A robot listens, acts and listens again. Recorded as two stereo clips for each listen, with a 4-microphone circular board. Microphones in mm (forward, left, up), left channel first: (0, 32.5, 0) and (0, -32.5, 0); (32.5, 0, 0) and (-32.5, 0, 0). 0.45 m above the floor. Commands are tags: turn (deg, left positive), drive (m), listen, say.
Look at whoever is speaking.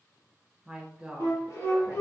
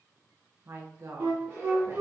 <turn deg="-165"/>
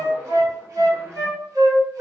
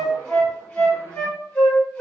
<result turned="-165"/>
<listen/>
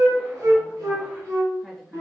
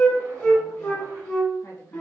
<listen/>
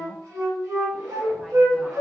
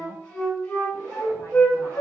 <say>I heard a woman speaking from this way, but can't make it out now.</say>